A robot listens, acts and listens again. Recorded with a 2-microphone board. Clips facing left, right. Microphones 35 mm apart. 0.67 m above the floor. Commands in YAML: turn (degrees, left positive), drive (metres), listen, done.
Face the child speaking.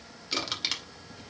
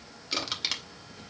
listen: true
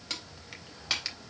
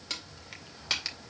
listen: true
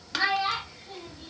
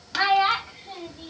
turn: -45
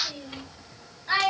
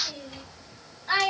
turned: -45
done: "Facing the child speaking."